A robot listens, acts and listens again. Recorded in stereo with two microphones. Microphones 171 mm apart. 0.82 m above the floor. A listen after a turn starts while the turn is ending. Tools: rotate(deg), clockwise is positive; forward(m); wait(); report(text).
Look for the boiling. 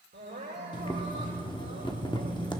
rotate(-25)
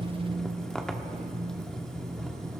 report("Found it: boiling, straight ahead.")